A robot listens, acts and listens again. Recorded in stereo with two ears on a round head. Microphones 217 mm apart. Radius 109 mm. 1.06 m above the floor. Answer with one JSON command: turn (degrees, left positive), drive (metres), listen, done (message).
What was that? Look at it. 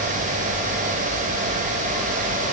{"listen": true}
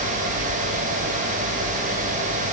{"listen": true}
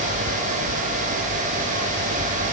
{"done": "I can't make out anything to turn to."}